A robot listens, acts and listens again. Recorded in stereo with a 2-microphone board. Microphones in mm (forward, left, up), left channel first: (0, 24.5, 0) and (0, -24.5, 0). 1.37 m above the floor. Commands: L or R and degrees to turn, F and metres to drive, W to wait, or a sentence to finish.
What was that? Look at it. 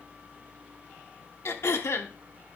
L65
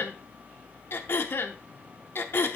L50
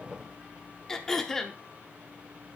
L10
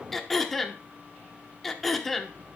Facing the throat clearing, under 1 m away.